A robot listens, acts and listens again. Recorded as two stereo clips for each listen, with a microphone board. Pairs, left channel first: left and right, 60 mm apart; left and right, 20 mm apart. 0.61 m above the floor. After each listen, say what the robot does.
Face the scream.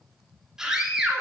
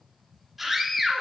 Turn 30° right.
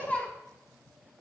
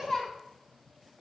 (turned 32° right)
Turn 20° left.
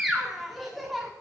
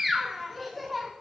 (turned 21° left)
Found it: a scream, straight ahead.